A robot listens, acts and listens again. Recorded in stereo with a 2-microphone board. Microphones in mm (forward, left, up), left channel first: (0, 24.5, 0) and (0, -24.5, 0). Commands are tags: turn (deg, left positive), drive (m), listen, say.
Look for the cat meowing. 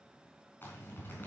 <listen/>
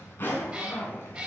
<turn deg="-30"/>
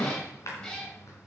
<turn deg="20"/>
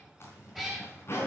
<say>Found it: a cat meowing, straight ahead, over 4 m away.</say>